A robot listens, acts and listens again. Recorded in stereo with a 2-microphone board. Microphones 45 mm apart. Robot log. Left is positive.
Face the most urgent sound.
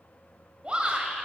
note: The shout: about 25° right or 155° right.
cmd yaw -25
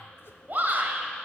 note: So it is at 125° right.
cmd yaw -125
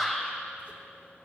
end: Facing the shout.